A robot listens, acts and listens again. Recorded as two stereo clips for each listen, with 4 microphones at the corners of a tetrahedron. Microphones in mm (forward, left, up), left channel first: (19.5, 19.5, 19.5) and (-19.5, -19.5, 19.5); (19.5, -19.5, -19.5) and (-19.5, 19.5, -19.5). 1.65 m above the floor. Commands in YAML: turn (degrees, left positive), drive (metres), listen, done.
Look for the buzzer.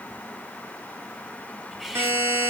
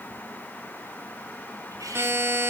turn: -175
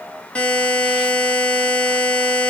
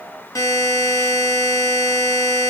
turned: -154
turn: -25
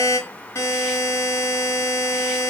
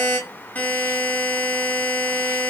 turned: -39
turn: 15
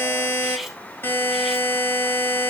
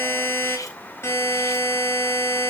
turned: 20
done: "Found it: a buzzer, straight ahead, over 4 m away."